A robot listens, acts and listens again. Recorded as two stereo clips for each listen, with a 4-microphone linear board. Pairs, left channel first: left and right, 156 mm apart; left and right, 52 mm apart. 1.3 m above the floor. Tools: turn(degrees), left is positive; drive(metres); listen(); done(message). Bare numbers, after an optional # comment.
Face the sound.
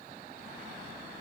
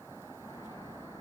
listen()
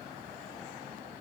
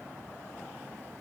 listen()
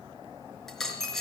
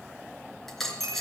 turn(30)
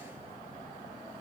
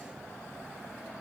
listen()
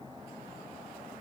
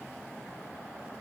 done("I heard a dropped coin, but can't make it out now. It was about 25° right or 145° left.")